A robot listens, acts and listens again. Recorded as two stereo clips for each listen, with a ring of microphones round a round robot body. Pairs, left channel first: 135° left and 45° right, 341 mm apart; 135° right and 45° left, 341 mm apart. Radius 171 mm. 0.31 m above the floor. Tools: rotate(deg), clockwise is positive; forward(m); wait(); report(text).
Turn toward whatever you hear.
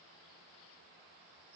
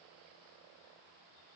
wait()
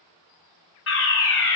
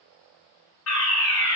rotate(175)
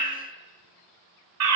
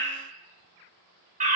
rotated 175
rotate(20)
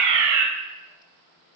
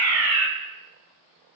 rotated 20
report("Facing the fire alarm, over 4 m away.")